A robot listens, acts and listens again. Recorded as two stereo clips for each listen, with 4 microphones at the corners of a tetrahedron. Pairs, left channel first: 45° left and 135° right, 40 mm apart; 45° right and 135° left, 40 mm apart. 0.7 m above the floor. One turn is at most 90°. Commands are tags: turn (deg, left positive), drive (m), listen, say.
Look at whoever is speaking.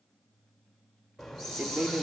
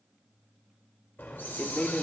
<turn deg="-90"/>
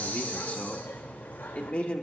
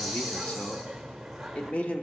<say>Facing the man speaking.</say>